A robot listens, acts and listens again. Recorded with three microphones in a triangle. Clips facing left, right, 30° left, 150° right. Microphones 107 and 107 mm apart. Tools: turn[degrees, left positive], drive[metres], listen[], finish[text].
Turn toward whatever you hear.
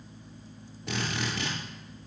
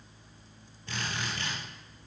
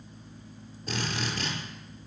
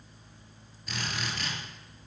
Thought: The drill: 80° left.
Action: turn[80]
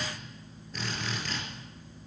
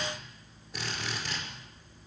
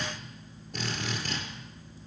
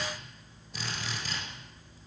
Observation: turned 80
Thought: The drill is now 10° right.
Action: turn[-10]
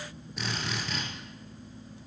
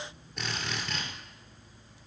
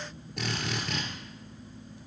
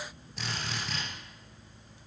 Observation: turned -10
Action: finish[Found it: a drill, straight ahead, over 4 m away.]